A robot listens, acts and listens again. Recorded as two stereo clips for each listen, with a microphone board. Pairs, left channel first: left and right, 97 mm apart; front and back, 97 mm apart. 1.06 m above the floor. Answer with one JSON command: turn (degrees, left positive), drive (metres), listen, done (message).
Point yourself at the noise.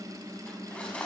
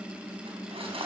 {"turn": 170}
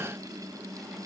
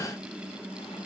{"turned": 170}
{"listen": true}
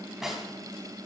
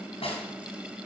{"done": "Facing the cutlery clinking."}